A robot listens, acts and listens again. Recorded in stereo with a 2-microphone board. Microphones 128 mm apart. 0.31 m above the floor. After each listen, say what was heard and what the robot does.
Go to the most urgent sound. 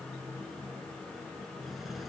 Keep listening.
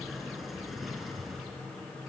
Keep listening.
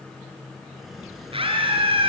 The scream: about 45° right or 135° right. Turn 45° right.
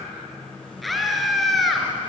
Drive 1.0 m forward.
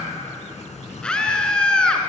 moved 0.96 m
The scream is now 10° left. Turn 10° left.
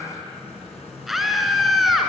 Drive 1.0 m forward.
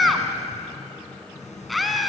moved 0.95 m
Drive 1.0 m forward.
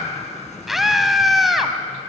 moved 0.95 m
Drive 1.0 m forward.
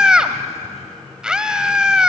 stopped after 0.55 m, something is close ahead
The scream is now 10° right. Turn 10° right.
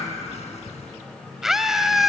Arrived at the scream, straight ahead.